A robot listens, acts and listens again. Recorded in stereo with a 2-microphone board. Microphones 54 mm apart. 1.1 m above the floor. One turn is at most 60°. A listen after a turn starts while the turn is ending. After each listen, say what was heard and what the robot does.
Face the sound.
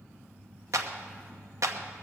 The clap: about 75° right or 105° right. Turn 60° right.
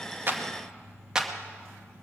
So it is at 15° right. Turn 15° right.
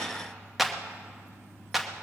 Facing the clap.